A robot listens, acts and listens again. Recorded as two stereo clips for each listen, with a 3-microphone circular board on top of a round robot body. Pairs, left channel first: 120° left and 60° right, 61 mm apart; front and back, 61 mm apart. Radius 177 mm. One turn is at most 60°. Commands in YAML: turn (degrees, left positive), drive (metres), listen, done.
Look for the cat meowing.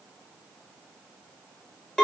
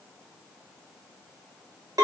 listen: true
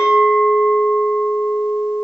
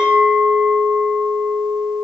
listen: true
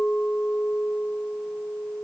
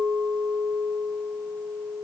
done: "I can't make out a cat meowing, only a clink."